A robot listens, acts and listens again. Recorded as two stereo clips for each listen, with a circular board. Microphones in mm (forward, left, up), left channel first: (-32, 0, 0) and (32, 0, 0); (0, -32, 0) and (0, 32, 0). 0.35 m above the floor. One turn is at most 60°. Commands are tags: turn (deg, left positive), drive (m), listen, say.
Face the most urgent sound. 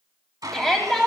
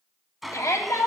<turn deg="-60"/>
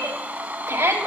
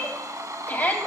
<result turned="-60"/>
<turn deg="-30"/>
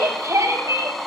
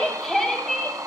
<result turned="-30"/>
<say>Found it: a shout, straight ahead, 2 to 4 m away.</say>